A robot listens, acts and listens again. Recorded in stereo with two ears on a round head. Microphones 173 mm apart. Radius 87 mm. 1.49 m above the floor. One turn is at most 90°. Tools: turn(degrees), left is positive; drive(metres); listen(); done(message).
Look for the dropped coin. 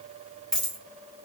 turn(degrees=30)
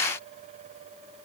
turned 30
listen()
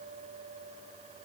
done("I heard a dropped coin, but can't make it out now. It was about 25° right or 145° left.")